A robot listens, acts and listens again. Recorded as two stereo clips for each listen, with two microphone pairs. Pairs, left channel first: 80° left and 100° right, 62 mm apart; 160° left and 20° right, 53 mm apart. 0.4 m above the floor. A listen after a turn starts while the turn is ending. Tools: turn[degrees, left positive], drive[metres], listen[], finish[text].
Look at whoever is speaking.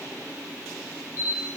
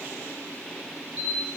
Action: listen[]
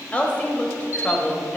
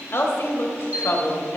Thought: The woman speaking: 145° left.
Action: turn[145]
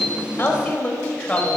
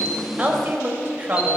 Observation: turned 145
Thought: The woman speaking is now 15° left.
Action: turn[15]
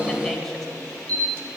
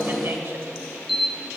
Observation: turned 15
Action: listen[]
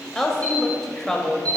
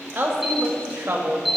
Action: finish[Facing the woman speaking, 1 to 2 m away.]